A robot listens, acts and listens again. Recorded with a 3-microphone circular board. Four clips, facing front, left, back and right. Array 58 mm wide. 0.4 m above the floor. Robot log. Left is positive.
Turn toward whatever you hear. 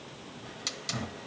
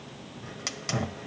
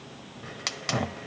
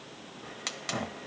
note: The hiss: 175° left.
cmd yaw +175
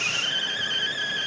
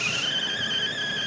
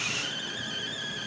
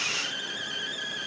note: The hiss is now 45° left.
cmd yaw +45
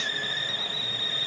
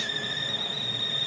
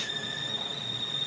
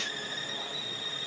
note: The hiss is now 15° left.
cmd yaw +15
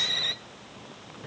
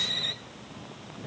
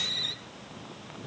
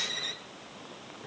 end: Facing the hiss, 1 to 2 m away.